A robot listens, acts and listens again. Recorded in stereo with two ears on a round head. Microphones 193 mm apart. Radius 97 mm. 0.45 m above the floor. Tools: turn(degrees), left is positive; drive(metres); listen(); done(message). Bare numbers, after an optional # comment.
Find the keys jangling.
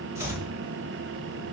listen()
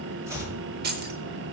# The keys jangling: about 45° right or 135° right.
turn(-45)
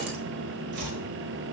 listen()
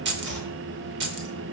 # So it is at 75° right.
turn(-75)
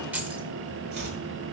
# The keys jangling is now 10° right.
turn(-10)
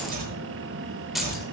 done("Found it: keys jangling, straight ahead.")